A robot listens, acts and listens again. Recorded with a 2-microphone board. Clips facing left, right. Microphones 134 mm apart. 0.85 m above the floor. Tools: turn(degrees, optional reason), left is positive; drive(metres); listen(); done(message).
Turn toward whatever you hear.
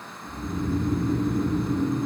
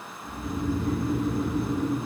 turn(degrees=-65, reason="The snoring: about 65° right or 115° right.")
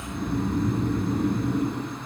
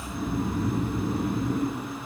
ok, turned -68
done("Found it: snoring, straight ahead, 2 to 4 m away.")